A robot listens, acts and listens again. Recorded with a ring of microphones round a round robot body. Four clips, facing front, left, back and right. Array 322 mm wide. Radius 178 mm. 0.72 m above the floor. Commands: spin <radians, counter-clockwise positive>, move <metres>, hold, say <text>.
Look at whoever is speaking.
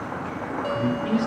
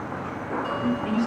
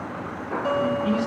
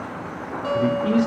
spin -1.40
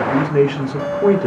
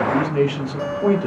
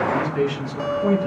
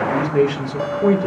spin -0.17
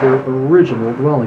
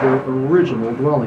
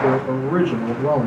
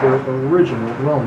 spin 0.17
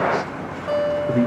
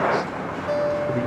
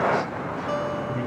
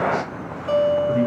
spin 0.35
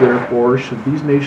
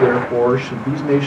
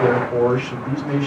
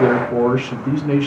spin 0.17
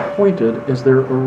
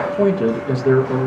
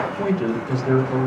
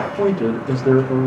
say Found it: a man speaking, straight ahead, 2 to 4 m away.